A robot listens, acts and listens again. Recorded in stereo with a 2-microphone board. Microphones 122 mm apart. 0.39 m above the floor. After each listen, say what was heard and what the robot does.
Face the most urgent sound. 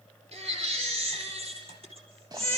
The baby crying: about 50° right or 130° right. Turn 50° right.
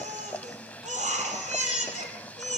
So it is at 80° right. Turn 80° right.
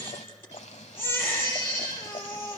The baby crying is now 20° left. Turn 20° left.
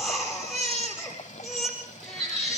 Found it: a baby crying, straight ahead.